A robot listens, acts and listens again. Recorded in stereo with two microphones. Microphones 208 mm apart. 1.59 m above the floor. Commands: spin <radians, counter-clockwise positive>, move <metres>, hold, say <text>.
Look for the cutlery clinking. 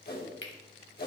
spin 1.13
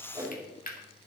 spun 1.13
spin 0.79
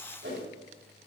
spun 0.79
hold
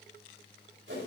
hold
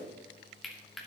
say Found it: cutlery clinking, straight ahead.